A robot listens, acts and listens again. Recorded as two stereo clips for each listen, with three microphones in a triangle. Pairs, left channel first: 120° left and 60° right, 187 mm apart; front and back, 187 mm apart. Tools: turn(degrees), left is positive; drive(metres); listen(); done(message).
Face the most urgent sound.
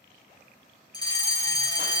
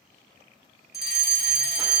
turn(degrees=-175)
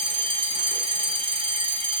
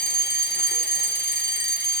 done("Facing the fire alarm.")